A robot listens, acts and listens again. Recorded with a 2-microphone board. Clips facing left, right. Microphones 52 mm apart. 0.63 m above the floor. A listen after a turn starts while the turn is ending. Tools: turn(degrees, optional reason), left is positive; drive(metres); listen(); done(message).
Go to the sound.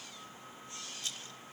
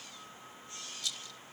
turn(degrees=40, reason="The rattle: about 40° left or 140° left.")
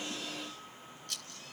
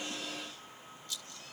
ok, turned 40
turn(degrees=100, reason="So it is at 100° left.")
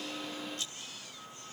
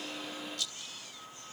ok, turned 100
turn(degrees=35, reason="The rattle is now 35° left.")
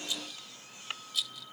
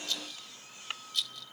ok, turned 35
drive(metres=1.0)
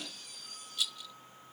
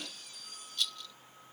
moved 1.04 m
turn(degrees=10, reason="The rattle is now 10° left.")
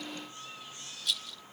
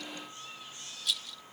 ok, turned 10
drive(metres=1.0)
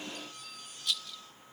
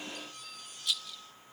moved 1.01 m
drive(metres=1.0)
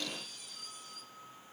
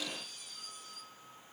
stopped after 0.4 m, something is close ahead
listen()
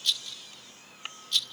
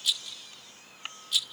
turn(degrees=-10, reason="The rattle is now 10° right.")
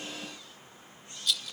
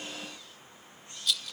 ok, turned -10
done("Arrived at the rattle, straight ahead.")